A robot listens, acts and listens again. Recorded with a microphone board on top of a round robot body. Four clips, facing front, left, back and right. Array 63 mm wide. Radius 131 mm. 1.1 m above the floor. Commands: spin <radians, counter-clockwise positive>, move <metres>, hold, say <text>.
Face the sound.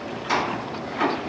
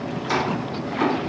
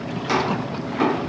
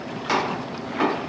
spin -2.01
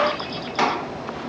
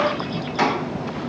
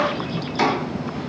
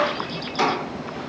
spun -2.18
say Facing the chopping.